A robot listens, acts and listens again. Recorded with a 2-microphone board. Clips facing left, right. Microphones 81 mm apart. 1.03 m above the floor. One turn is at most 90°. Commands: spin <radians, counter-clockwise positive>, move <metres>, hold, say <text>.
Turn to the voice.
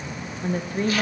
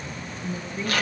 spin 0.87
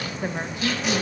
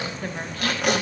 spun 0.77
spin 0.35
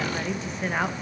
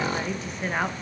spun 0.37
say Found it: a woman speaking, straight ahead, 1 to 2 m away.